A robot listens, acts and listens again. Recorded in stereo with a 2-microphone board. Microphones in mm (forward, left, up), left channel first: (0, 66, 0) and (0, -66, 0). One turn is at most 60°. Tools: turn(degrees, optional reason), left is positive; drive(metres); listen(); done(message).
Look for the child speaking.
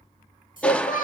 turn(degrees=60)
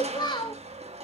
turn(degrees=35, reason="So it is at 35° left.")
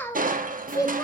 turn(degrees=25, reason="The child speaking is now 25° left.")
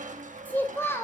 turn(degrees=20, reason="The child speaking is now 20° left.")
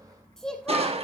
done("Facing the child speaking, 2 to 4 m away.")